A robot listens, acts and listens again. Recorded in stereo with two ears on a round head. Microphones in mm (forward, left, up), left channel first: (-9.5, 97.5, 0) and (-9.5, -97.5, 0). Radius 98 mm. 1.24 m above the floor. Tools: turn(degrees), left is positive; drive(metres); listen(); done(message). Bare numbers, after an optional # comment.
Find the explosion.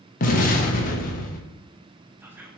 # The explosion: about 35° left or 145° left.
turn(35)
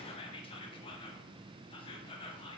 listen()
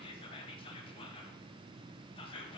done("I heard an explosion, but can't make it out now. It was about straight ahead or 110° left.")